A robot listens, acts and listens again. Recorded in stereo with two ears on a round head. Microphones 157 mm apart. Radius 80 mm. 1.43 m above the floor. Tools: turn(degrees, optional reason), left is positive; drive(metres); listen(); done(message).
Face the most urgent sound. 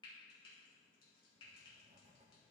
listen()
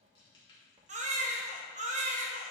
turn(degrees=-40, reason="The baby crying: about 40° right or 140° right.")
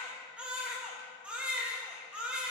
turn(degrees=-10, reason="So it is at 10° right.")
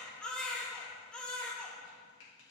done("Found it: a baby crying, straight ahead.")